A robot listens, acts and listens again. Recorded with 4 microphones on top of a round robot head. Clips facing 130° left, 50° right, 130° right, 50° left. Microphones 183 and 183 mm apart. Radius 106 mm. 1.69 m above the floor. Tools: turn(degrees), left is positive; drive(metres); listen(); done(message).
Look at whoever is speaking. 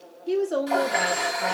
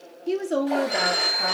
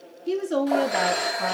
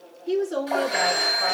turn(degrees=-110)
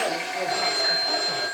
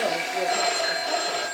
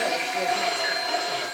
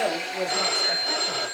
listen()
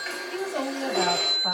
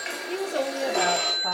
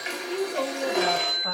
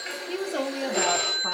turn(degrees=10)
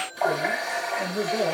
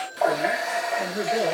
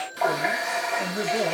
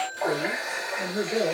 done("Found it: a woman speaking, straight ahead.")